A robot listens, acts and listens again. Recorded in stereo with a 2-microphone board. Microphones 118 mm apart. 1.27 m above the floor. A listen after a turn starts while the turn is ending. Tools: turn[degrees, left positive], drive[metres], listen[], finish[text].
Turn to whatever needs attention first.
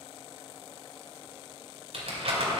Action: listen[]
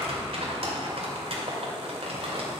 Action: listen[]
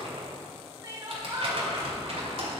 Thought: The crying: about 30° right or 150° right.
Action: turn[-30]
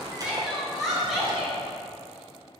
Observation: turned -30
Action: finish[Facing the crying, 2 to 4 m away.]